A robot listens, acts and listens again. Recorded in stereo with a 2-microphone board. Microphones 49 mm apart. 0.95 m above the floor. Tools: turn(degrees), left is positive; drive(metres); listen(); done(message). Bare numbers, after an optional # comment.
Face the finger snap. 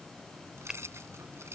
turn(-30)
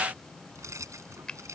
# So it is at 15° left.
turn(15)
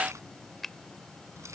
done("Found it: a finger snap, straight ahead.")